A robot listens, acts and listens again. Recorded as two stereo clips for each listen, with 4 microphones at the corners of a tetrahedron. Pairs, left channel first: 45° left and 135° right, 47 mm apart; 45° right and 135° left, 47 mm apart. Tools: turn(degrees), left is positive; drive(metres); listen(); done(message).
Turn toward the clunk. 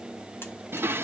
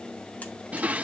listen()
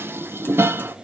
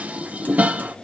listen()
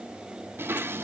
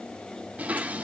done("I can't make out a clunk to turn to.")